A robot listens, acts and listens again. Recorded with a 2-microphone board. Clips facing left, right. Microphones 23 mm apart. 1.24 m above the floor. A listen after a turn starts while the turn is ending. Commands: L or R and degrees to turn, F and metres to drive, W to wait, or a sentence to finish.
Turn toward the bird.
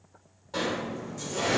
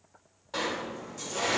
W
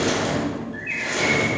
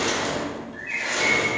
L35
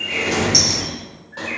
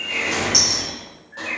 Facing the bird, under 1 m away.